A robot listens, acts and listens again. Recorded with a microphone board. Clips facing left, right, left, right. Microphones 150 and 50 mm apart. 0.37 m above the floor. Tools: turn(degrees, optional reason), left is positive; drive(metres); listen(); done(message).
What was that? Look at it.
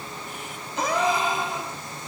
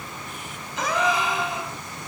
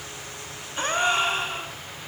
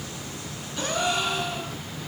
turn(degrees=30, reason="The gasp: about 30° left or 150° left.")
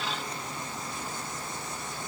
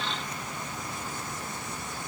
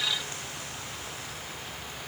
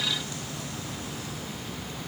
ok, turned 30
listen()
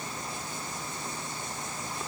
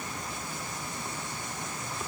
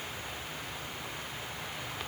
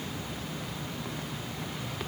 done("I heard a gasp, but can't make it out now. It was about straight ahead or 120° left.")